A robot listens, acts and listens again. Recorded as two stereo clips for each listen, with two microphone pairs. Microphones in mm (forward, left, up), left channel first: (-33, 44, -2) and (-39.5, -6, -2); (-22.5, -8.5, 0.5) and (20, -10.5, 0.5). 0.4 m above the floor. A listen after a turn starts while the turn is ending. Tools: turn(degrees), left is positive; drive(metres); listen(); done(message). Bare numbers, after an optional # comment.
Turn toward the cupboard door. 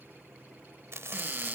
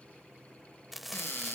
# The cupboard door: 150° right.
turn(-150)
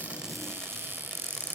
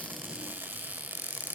# The cupboard door is now 50° right.
turn(-50)
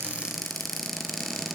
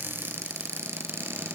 done("Facing the cupboard door, 2 to 4 m away.")